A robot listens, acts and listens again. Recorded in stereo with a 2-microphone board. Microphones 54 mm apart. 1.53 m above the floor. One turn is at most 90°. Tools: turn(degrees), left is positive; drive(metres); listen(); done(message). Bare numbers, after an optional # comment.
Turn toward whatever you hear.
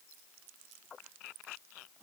listen()
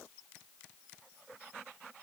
listen()
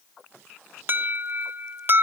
# The alarm: about 40° right or 140° right.
turn(-40)
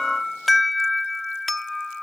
done("Facing the alarm.")